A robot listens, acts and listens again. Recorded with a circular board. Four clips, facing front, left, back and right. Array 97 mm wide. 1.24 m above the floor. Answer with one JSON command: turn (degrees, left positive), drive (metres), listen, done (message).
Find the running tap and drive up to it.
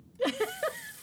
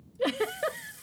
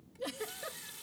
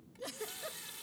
{"turn": -120}
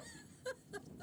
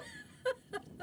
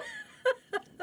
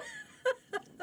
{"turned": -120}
{"listen": true}
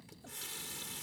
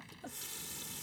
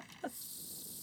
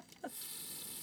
{"turn": 25}
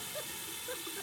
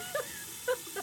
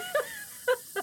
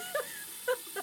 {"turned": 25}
{"turn": 10}
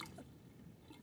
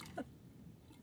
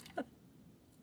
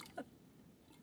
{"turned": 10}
{"listen": true}
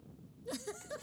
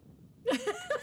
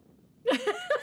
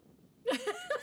{"listen": true}
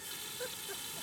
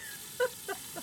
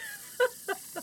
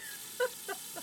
{"drive": 1.0}
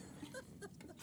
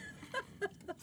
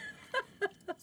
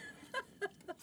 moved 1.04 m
{"listen": true}
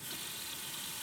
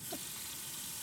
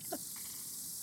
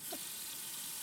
{"drive": 1.0}
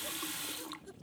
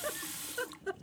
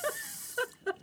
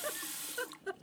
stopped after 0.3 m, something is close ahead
{"done": "I am next to the running tap."}